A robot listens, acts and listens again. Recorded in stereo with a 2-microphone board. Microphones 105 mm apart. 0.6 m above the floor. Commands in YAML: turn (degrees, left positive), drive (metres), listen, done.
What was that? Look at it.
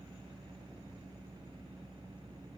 listen: true
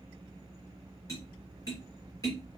turn: 35
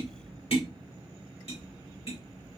turn: 110
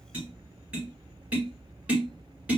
turn: -15
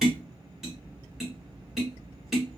done: "Facing the tapping."